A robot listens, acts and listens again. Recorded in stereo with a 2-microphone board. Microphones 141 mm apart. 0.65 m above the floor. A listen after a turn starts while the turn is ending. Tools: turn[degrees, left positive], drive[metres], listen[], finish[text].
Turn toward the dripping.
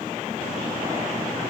Action: listen[]
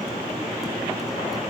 Action: listen[]
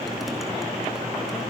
Action: finish[I can't make out dripping.]